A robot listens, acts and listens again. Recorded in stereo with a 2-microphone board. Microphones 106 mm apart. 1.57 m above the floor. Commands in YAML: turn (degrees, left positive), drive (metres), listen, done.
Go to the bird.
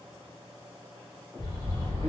turn: 40
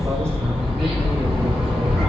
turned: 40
drive: 1.0
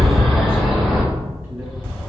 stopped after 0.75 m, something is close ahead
done: "Arrived at the bird, straight ahead."